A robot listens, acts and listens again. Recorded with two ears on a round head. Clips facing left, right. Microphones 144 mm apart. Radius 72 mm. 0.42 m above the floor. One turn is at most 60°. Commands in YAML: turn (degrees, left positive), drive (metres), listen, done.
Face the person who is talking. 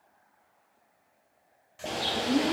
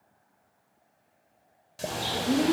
turn: -30
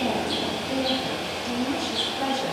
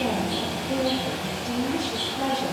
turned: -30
turn: 15
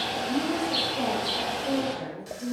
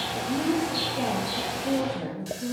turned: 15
done: "Facing the woman speaking, over 4 m away."